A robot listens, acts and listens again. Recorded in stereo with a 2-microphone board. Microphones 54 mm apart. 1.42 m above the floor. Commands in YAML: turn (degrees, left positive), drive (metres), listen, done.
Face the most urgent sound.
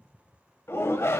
turn: 55
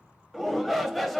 done: "Found it: a shout, straight ahead."